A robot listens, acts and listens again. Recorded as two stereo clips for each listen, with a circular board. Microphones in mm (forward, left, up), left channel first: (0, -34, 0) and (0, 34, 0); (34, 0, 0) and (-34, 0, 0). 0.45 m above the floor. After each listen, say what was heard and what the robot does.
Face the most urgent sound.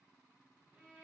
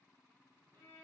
Keep listening.
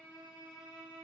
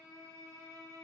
Keep listening.
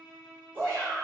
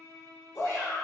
The shout: 50° left. Turn 50° left.
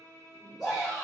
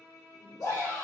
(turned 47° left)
Facing the shout, 1 to 2 m away.